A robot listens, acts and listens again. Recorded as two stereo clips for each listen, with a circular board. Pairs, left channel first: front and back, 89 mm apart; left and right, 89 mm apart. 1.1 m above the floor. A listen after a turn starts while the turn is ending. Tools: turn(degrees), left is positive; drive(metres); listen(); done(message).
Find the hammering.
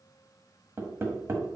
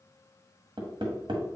turn(degrees=-120)
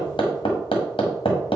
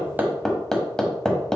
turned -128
done("Facing the hammering, 1 to 2 m away.")